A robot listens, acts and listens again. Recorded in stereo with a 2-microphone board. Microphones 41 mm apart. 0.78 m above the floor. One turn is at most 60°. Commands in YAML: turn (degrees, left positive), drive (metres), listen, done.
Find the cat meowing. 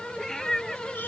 turn: 30
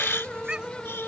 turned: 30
listen: true
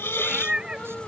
turn: -25
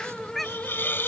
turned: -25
done: "Facing the cat meowing."